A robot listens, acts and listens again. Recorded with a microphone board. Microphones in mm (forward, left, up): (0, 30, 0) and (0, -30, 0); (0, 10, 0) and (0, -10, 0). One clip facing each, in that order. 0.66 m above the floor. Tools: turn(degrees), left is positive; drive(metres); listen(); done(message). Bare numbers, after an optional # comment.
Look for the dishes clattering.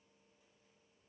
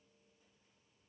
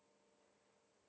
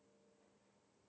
listen()
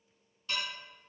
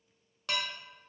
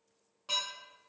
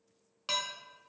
turn(-90)
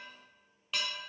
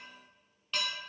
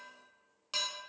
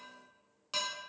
done("Found it: dishes clattering, straight ahead, under 1 m away.")